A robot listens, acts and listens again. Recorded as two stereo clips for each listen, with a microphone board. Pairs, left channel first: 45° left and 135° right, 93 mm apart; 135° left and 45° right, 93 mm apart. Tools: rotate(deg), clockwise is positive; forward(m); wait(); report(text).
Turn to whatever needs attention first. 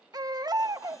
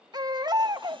rotate(90)
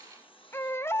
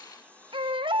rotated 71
rotate(20)
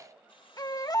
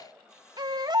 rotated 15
report("Found it: a baby crying, straight ahead, 1 to 2 m away.")